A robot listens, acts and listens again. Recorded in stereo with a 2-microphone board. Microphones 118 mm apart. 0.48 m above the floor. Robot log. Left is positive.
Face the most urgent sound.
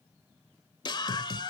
note: The scream: about 40° left or 140° left.
cmd yaw +40
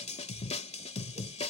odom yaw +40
note: So it is at 100° left.
cmd yaw +100
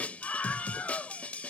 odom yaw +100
note: The scream is now 15° left.
cmd yaw +15
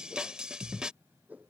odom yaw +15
end: Found it: a scream, straight ahead.